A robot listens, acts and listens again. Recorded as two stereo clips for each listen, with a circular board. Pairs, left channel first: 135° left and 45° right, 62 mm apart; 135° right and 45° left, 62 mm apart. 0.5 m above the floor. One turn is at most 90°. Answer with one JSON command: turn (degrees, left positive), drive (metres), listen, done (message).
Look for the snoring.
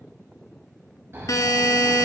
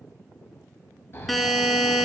{"turn": -90}
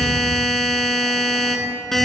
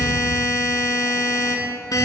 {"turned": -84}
{"listen": true}
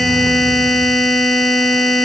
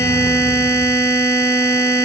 {"listen": true}
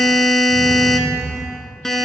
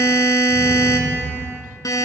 {"done": "Facing the snoring, under 1 m away."}